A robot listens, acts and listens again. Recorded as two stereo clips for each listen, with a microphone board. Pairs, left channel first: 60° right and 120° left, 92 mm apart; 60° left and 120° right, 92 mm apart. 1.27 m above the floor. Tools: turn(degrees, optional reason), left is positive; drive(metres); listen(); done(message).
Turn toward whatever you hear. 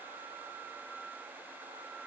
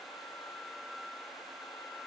listen()
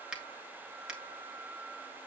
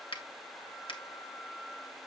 turn(degrees=40, reason="The finger snap: 40° left.")
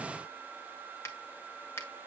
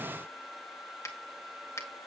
done("Facing the finger snap, 2 to 4 m away.")